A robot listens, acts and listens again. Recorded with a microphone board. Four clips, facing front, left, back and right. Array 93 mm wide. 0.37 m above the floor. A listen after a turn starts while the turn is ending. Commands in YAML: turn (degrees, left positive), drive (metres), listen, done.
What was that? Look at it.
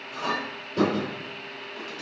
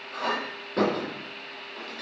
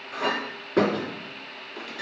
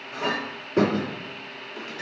turn: -170
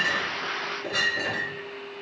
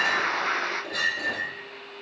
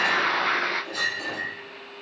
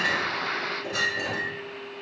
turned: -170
turn: -15
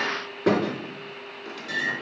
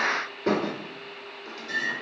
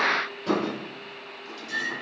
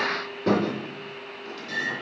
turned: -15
done: "Facing the clink."